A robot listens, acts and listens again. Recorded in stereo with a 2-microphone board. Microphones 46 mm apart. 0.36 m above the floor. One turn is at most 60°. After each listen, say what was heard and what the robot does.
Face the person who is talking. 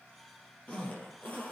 Keep listening.
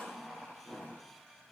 Keep listening.
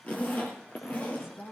The woman speaking: about 75° left or 105° left. Turn 60° left.
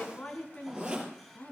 So it is at 35° left. Turn 35° left.
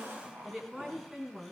Facing the woman speaking.